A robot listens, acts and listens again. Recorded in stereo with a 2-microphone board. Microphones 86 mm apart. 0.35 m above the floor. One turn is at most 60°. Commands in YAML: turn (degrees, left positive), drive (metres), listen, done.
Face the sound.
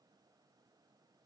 listen: true
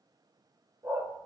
turn: -45
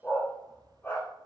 turn: 25
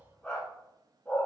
turn: 15
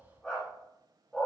done: "Facing the dog barking."